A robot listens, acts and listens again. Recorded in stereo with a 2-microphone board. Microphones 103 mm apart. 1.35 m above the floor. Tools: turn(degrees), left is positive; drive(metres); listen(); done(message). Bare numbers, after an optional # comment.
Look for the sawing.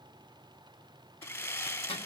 # The sawing: about 30° left or 150° left.
turn(30)
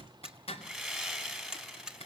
done("Facing the sawing.")